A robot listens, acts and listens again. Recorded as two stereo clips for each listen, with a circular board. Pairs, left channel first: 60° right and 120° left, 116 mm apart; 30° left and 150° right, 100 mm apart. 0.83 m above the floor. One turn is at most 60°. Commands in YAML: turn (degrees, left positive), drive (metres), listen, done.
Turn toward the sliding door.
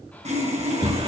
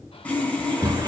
turn: 60
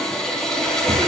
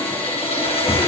turn: 60
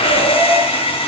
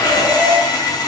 turn: 40
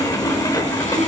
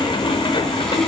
done: "Facing the sliding door."